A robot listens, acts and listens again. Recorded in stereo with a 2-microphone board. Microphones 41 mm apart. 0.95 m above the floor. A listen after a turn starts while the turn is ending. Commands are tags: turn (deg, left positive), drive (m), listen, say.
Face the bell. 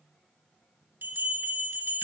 <turn deg="-65"/>
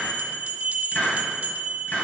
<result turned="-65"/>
<turn deg="-45"/>
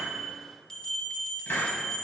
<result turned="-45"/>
<turn deg="15"/>
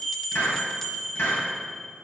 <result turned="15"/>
<say>Facing the bell, 1 to 2 m away.</say>